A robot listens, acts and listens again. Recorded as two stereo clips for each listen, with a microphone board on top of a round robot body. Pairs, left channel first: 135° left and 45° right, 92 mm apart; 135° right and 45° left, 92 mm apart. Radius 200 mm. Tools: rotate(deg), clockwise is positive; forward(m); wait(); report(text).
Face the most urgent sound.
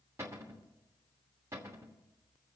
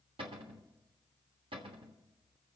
wait()
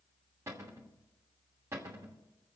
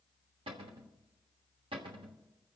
wait()
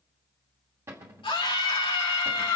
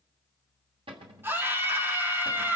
rotate(-110)
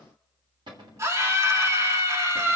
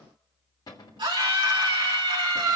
rotate(-10)
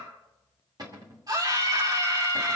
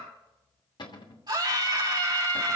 report("Found it: a scream, straight ahead.")